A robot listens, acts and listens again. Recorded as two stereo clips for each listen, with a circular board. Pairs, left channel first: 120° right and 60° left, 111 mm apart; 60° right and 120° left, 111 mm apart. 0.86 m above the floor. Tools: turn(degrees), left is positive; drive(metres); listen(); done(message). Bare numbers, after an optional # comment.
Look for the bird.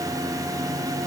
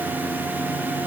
listen()
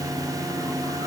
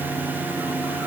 listen()
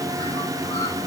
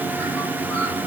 done("I can't make out a bird to turn to.")